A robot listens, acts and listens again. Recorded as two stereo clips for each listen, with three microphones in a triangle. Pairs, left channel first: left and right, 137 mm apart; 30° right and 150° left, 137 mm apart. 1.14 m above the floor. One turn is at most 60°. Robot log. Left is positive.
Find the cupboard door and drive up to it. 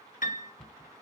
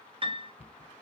cmd fwd 1.0
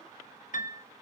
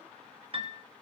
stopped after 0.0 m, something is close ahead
cmd idle
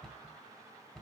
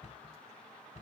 end: Something is in my way. I am facing the cupboard door but have not reached it.